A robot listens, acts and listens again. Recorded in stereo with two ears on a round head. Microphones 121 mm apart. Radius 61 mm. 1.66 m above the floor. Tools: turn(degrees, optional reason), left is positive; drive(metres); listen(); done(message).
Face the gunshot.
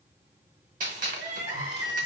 turn(degrees=-65, reason="The gunshot: about 65° right or 115° right.")
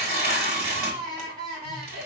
listen()
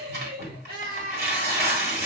done("I heard a gunshot, but can't make it out now. It was about straight ahead or 50° right.")